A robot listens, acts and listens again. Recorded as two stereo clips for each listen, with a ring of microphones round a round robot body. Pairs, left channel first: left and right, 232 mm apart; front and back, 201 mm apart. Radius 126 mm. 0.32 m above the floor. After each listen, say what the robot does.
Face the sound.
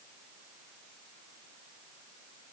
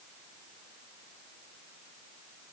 Keep listening.
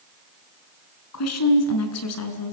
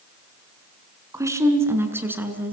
Turn 100° left.
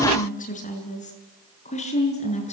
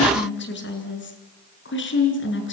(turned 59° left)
Turn 25° left.
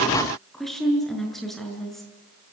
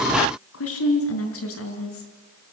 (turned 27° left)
Facing the woman speaking.